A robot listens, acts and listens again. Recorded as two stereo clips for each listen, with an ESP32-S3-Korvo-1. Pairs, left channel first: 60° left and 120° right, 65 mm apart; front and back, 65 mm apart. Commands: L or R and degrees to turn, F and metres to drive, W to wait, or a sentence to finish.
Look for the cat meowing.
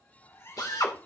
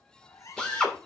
L20
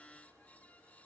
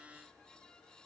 W
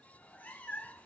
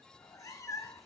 Facing the cat meowing, 1 to 2 m away.